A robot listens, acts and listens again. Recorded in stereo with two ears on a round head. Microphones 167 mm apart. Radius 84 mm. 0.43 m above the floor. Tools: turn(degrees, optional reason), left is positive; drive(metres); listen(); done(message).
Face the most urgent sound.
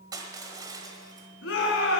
turn(degrees=65, reason="The shout: about 65° left or 115° left.")
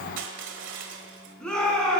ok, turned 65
done("Facing the shout, 2 to 4 m away.")